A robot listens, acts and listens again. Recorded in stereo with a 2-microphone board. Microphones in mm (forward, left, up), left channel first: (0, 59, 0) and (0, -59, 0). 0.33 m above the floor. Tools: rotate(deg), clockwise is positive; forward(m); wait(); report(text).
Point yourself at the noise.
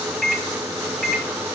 rotate(-30)
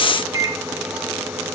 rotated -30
rotate(30)
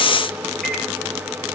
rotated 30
wait()
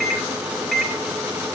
report("Found it: a microwave, straight ahead.")